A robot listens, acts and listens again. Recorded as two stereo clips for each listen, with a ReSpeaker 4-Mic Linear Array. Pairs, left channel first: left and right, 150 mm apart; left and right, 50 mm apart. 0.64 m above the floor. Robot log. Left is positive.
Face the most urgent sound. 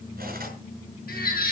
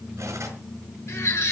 cmd yaw +90
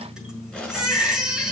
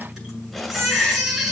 end: Found it: a baby crying, straight ahead, over 4 m away.